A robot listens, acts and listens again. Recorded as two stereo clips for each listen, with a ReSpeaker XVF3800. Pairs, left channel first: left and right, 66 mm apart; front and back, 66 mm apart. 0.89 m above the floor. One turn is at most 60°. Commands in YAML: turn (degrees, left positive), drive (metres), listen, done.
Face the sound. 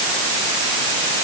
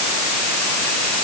listen: true
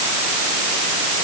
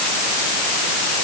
listen: true
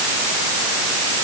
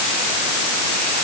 done: "I can't make out anything to turn to."